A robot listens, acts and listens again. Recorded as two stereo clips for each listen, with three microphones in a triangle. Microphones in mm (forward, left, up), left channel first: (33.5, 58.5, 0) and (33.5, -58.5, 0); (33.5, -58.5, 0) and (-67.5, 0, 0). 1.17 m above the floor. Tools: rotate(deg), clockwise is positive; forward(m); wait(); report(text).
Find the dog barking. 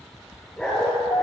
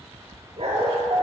rotate(-180)
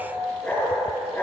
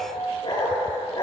rotate(-20)
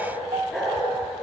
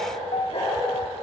report("Facing the dog barking.")